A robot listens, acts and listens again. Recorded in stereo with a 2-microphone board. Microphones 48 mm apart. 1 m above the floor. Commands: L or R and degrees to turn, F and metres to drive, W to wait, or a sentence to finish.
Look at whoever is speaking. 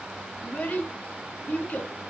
L35
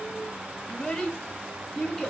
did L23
L15
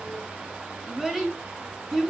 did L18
Facing the child speaking.